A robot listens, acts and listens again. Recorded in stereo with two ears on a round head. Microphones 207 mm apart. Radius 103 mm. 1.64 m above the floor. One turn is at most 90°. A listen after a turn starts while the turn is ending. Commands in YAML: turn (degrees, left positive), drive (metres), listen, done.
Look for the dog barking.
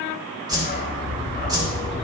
turn: 40
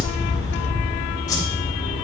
turn: 90
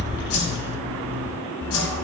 turn: 15
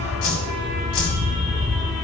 done: "Found it: a dog barking, straight ahead, 2 to 4 m away."